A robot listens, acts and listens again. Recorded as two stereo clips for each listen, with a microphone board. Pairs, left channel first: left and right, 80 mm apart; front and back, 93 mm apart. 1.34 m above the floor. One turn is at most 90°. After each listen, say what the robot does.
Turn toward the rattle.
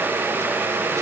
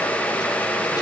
Keep listening.
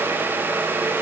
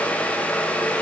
Keep listening.
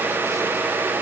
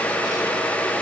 I can't make out a rattle to turn to.